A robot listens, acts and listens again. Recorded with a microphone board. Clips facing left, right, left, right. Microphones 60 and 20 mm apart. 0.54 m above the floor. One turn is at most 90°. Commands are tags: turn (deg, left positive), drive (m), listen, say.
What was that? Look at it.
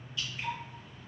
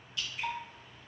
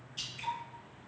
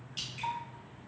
<turn deg="-90"/>
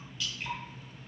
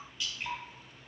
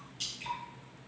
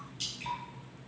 <say>Found it: dripping, straight ahead.</say>